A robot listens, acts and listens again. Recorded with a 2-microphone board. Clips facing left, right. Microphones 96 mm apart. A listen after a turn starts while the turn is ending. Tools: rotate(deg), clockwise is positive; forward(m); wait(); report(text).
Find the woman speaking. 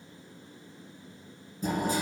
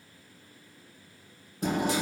wait()
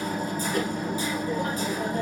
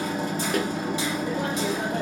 wait()
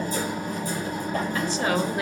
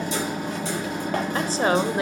rotate(30)
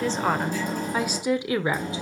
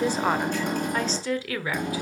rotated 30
rotate(-25)
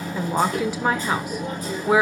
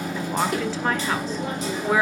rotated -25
rotate(-10)
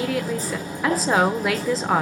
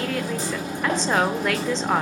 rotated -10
report("Facing the woman speaking, 1 to 2 m away.")